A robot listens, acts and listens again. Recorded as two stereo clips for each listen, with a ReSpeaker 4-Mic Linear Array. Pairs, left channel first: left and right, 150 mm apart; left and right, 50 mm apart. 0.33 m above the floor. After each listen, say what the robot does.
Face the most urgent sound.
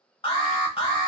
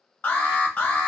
Turn 35° left.
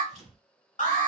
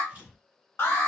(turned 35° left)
Turn 105° left.
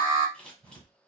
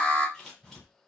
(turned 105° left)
Turn 35° left.
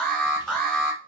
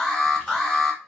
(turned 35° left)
Found it: an alarm, straight ahead, under 1 m away.